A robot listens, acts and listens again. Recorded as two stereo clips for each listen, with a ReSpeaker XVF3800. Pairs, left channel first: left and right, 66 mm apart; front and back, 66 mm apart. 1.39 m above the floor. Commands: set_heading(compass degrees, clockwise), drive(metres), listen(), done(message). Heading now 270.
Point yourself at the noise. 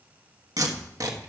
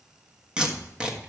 set_heading(15)
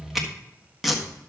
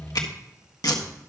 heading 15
done("Found it: tape being pulled, straight ahead, 1 to 2 m away.")